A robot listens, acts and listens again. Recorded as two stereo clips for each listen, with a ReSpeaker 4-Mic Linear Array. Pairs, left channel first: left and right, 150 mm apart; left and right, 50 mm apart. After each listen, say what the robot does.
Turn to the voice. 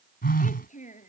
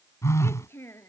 Turn 60° left.
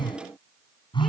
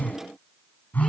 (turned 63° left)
Keep listening.
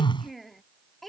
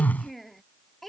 Facing the child speaking.